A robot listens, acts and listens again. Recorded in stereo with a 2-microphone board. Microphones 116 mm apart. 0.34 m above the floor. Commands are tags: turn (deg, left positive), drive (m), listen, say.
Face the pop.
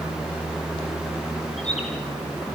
<listen/>
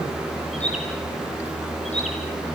<listen/>
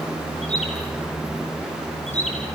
<say>I can't make out a pop, only a bird.</say>